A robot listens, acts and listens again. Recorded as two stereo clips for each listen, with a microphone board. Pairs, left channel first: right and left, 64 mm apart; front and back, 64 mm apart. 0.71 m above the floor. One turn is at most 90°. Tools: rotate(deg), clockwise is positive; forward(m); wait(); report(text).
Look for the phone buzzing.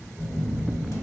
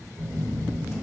rotate(90)
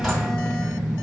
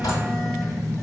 rotate(90)
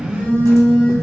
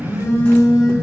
rotate(25)
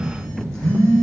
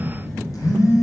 rotate(15)
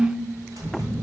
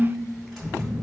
report("Facing the phone buzzing, 1 to 2 m away.")